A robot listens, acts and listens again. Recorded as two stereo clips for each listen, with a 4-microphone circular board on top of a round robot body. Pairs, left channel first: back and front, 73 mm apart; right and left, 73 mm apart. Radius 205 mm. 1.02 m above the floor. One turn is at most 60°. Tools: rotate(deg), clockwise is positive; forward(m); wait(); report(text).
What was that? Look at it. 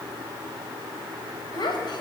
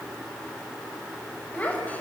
rotate(60)
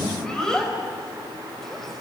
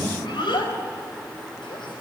rotate(60)
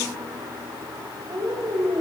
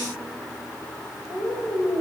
rotate(40)
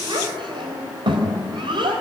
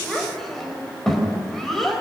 report("Found it: a child speaking, straight ahead.")